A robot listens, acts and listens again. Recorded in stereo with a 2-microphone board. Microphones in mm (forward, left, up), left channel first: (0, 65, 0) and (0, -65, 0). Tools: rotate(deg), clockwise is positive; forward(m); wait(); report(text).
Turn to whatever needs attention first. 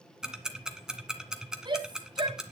rotate(35)
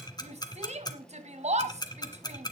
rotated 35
rotate(100)
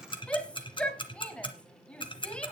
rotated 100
rotate(-10)
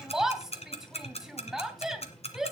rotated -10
report("Facing the shout, 2 to 4 m away.")